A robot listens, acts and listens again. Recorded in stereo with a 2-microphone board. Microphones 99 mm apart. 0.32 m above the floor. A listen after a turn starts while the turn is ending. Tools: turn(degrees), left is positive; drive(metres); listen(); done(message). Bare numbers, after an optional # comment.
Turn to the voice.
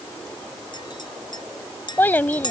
# The child speaking: about 20° left or 160° left.
turn(20)
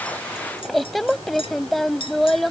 done("Facing the child speaking.")